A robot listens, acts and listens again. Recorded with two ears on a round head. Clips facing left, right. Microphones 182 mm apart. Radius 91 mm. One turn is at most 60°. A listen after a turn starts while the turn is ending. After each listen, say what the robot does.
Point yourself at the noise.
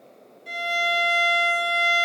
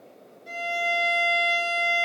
Turn 25° left.
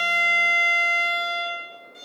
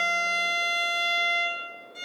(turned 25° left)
Facing the violin.